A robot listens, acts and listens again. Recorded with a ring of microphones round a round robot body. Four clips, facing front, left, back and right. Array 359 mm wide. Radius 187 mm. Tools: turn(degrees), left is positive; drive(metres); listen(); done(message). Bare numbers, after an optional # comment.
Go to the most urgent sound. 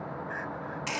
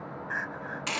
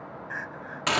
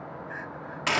# The crying: 115° left.
turn(115)
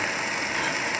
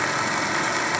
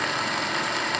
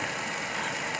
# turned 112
listen()
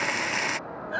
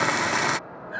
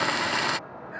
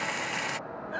drive(1.0)
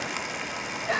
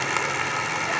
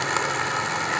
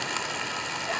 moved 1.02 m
listen()
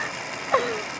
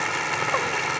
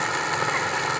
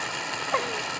listen()
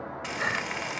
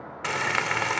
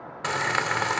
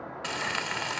done("Facing where the crying came from. I can't hear it now. I did not reach it.")